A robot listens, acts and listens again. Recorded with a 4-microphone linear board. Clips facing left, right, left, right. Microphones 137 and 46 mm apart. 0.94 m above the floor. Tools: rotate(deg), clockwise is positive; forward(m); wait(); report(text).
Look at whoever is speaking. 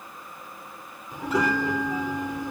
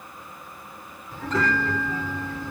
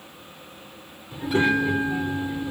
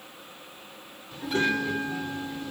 rotate(-15)
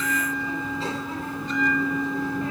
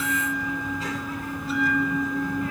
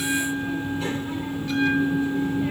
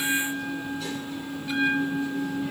rotate(-150)
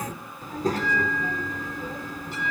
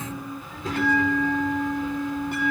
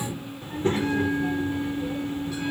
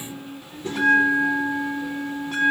rotate(-40)
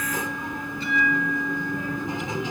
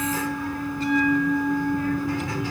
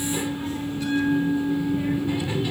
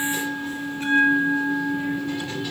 rotate(-20)
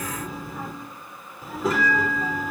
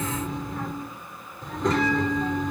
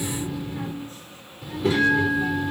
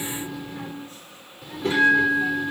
report("Facing the child speaking, 2 to 4 m away.")